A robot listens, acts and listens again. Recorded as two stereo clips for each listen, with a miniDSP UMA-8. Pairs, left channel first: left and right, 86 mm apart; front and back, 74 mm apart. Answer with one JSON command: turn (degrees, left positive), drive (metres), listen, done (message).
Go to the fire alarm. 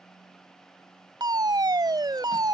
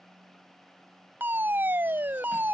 {"turn": -120}
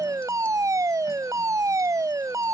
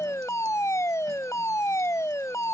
{"turn": -45}
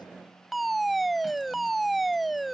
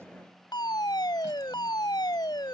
{"drive": 1.0}
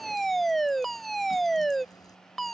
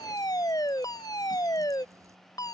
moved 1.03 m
{"drive": 1.0}
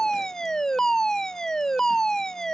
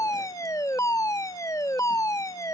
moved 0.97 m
{"turn": 10}
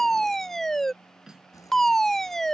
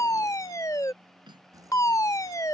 {"drive": 1.0}
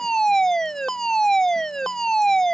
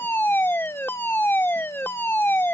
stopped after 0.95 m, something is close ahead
{"turn": 15}
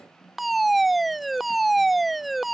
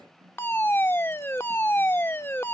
{"done": "Arrived at the fire alarm, straight ahead."}